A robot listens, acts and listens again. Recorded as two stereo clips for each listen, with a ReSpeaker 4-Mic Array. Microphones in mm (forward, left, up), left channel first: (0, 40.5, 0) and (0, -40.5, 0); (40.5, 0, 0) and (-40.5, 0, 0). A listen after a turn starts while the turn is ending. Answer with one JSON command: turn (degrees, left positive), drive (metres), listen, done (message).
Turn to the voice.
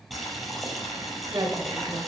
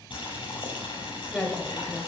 {"turn": -75}
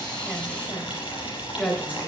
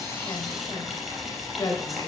{"turn": 15}
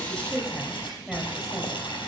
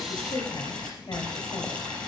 {"done": "Found it: a woman speaking, straight ahead, 2 to 4 m away."}